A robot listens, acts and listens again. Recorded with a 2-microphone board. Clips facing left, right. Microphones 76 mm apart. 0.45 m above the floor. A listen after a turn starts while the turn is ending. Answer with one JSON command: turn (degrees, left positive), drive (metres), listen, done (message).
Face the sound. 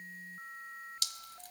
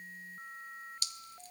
{"turn": 90}
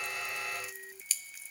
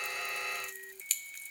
{"done": "Facing the dripping."}